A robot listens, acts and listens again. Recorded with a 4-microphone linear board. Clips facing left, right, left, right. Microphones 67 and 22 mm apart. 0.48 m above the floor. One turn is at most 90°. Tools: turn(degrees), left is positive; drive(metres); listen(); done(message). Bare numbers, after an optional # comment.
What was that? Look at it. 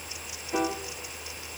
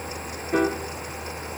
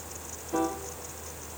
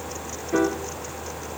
# The piano: about 50° right or 130° right.
turn(-50)
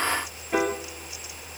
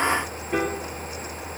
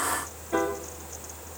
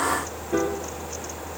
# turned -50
done("Found it: a piano, straight ahead.")